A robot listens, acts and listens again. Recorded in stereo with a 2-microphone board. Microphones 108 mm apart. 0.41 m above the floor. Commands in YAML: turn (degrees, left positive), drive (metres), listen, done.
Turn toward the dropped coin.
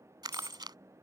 turn: -20
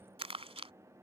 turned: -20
listen: true
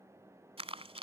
done: "I heard a dropped coin, but can't make it out now. It was about straight ahead or 140° right."